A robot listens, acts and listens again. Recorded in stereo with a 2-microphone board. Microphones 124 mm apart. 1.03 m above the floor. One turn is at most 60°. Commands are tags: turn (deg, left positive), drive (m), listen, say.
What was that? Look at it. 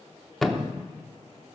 <turn deg="30"/>
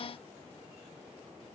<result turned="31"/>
<listen/>
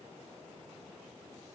<say>I heard a thud, but can't make it out now. It was about 30° right or 145° left.</say>